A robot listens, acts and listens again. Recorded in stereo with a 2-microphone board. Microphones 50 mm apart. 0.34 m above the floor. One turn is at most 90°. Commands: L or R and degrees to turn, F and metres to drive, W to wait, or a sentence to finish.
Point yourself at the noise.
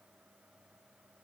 W
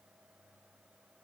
W
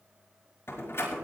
L60
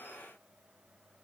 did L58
W
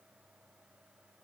I heard a door slam, but can't make it out now. It was about 5° left or 60° left.